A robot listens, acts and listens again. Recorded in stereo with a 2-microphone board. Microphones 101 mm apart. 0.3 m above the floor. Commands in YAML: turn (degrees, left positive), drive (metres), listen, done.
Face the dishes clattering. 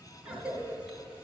listen: true
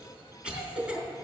listen: true
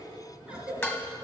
turn: 20
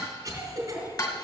turn: 135
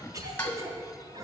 turn: 25
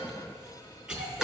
listen: true
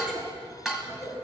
done: "Found it: dishes clattering, straight ahead."